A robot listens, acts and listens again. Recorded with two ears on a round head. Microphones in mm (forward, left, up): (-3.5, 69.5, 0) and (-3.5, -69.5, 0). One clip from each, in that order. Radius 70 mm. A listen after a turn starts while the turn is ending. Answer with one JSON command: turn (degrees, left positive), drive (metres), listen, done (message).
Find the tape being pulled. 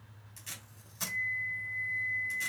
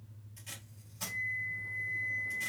{"turn": 45}
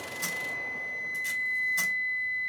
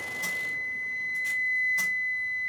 {"listen": true}
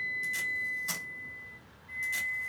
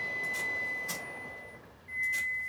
{"listen": true}
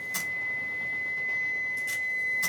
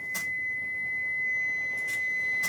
{"done": "I heard tape being pulled, but can't make it out now. It was about straight ahead or 90° left."}